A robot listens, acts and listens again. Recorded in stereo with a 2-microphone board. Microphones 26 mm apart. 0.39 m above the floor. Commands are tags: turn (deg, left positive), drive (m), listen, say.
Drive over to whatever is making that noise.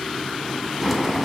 <turn deg="-30"/>
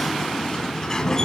<turn deg="20"/>
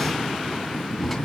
<drive m="1.0"/>
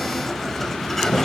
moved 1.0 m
<turn deg="10"/>
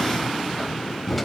<drive m="1.0"/>
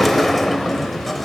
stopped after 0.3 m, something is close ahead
<say>I am next to the sliding door.</say>